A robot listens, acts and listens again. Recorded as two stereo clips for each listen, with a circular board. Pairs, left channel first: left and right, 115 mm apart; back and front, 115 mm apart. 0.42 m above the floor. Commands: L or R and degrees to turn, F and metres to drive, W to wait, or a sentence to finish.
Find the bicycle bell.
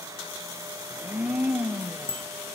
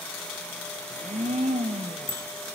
R45
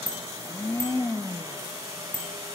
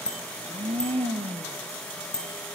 R10
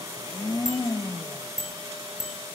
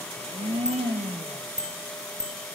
Facing the bicycle bell, over 4 m away.